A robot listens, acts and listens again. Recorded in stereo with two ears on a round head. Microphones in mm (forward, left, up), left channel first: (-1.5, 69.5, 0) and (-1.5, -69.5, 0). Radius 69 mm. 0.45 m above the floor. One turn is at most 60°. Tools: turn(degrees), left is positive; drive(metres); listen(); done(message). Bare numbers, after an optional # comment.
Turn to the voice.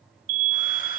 listen()
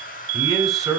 turn(30)
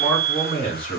# So it is at 140° left.
turn(60)
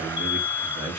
# The man speaking is now 60° left.
turn(60)
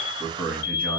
# The man speaking is now 10° left.
turn(10)
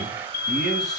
listen()
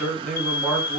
done("Found it: a man speaking, straight ahead, over 4 m away.")